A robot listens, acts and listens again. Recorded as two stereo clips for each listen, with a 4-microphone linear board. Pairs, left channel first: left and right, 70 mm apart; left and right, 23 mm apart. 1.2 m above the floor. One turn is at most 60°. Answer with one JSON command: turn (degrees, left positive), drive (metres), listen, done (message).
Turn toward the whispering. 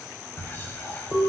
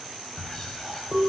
{"turn": 30}
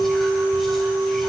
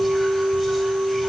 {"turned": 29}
{"listen": true}
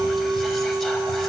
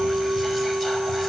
{"listen": true}
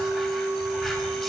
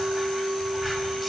{"done": "I heard whispering, but can't make it out now. It was about straight ahead or 125° left."}